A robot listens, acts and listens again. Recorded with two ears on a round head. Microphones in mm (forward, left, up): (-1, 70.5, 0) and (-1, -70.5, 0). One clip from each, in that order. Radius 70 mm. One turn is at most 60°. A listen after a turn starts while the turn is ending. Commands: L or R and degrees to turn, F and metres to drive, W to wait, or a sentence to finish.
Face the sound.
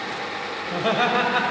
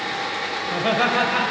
L30
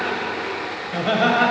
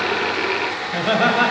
R10
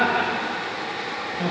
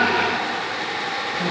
L10
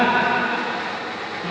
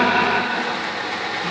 Facing the laughter, 2 to 4 m away.